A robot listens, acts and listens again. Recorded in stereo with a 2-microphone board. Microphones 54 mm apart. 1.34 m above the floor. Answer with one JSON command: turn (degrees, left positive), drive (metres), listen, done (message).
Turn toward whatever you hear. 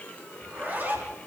{"turn": -35}
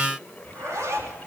{"turn": -110}
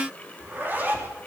{"turn": -35}
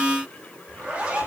{"turn": -25}
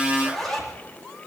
{"done": "Found it: a zipper, straight ahead, 2 to 4 m away."}